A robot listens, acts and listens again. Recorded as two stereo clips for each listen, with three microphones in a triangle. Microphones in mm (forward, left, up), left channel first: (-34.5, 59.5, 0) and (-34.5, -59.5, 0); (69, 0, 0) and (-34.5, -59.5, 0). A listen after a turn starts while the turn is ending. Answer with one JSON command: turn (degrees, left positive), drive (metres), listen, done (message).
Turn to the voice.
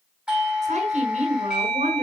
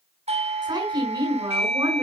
{"turn": -100}
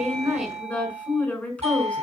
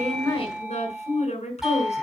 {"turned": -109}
{"turn": 10}
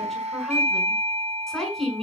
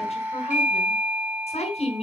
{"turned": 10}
{"done": "Facing the woman speaking."}